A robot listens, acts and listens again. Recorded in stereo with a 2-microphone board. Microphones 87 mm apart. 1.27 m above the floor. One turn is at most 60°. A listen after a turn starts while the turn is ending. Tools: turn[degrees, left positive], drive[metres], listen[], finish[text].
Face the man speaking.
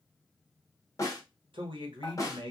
Thought: The man speaking: about 70° right or 110° right.
Action: turn[-60]
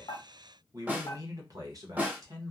Thought: So it is at 45° right.
Action: turn[-45]
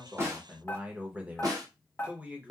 Thought: The man speaking is now 20° right.
Action: turn[-20]
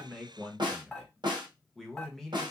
Action: finish[Facing the man speaking, under 1 m away.]